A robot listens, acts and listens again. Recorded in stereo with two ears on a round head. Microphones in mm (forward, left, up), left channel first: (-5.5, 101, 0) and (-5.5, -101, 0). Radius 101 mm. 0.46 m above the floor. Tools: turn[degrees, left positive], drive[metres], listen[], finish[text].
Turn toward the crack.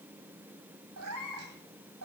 Action: listen[]
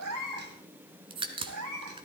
Thought: The crack: about 25° right or 155° right.
Action: turn[-25]
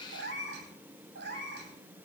Action: listen[]
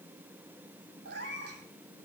Action: finish[I heard a crack, but can't make it out now. It was about straight ahead or 130° right.]